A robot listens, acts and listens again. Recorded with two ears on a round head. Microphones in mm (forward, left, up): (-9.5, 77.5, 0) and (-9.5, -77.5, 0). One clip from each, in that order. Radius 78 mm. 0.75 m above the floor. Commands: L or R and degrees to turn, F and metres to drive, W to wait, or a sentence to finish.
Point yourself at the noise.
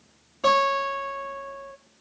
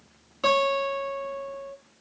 R40
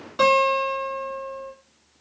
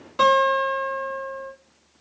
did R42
Found it: a guitar, straight ahead.